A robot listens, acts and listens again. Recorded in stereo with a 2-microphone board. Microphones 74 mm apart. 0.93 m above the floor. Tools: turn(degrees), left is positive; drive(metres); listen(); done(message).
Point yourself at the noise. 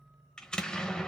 turn(degrees=30)
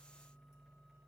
listen()
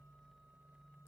done("I heard an explosion, but can't make it out now. It was about 20° right or 140° left.")